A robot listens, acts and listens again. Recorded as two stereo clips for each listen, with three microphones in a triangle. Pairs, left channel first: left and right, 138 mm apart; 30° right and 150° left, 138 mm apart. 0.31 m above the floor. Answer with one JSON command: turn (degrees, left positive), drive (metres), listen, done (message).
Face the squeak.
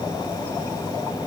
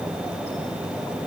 {"listen": true}
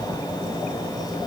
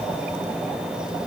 {"listen": true}
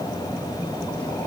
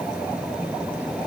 {"done": "I can't make out a squeak."}